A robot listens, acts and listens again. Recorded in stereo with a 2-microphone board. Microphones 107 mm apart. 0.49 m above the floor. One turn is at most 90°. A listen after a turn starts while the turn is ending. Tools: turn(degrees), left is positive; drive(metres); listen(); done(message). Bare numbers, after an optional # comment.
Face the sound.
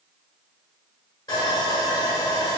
# The sawing: about 40° left or 140° left.
turn(40)
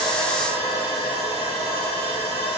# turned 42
# So it is at 95° left.
turn(90)
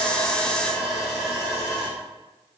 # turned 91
done("Facing the sawing.")